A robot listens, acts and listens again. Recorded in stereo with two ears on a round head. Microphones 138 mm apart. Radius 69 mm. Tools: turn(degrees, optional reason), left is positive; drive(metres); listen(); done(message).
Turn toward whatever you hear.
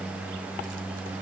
listen()
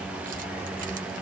listen()
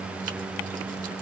done("I can't make out anything to turn to.")